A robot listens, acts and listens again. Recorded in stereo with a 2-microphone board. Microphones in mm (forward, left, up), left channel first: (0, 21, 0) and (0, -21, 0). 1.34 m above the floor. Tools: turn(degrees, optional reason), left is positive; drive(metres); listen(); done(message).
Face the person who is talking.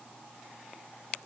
listen()
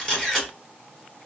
listen()
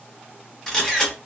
done("I can't make out anyone speaking, only a camera shutter.")